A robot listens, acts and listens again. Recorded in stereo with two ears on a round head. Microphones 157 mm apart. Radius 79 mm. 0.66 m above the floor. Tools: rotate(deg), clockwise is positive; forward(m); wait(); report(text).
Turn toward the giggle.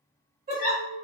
rotate(50)
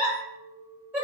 rotate(10)
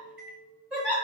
report("Found it: a giggle, straight ahead, 1 to 2 m away.")